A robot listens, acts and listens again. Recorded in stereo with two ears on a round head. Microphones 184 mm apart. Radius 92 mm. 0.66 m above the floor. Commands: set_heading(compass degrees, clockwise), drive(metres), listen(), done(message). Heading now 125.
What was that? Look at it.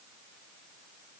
listen()
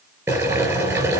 set_heading(155)
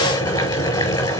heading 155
set_heading(140)
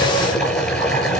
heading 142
done("Found it: boiling, straight ahead, over 4 m away.")